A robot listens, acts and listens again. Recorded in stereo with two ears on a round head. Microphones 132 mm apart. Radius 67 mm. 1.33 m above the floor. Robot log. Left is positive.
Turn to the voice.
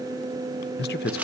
note: The man speaking: about 70° left or 110° left.
cmd yaw +70
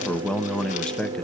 end: Found it: a man speaking, straight ahead.